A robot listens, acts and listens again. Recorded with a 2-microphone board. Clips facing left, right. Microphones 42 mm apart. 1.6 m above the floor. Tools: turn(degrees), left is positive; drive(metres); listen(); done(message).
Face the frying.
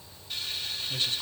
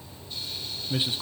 turn(degrees=90)
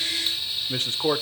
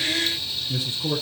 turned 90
turn(degrees=15)
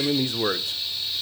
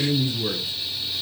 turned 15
done("Found it: frying, straight ahead, 2 to 4 m away.")